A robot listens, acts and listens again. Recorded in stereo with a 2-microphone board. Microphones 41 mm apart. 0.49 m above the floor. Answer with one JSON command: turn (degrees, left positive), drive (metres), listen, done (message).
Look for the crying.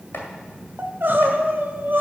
{"turn": -60}
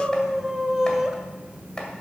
{"turn": -10}
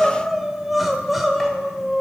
{"done": "Facing the crying, 1 to 2 m away."}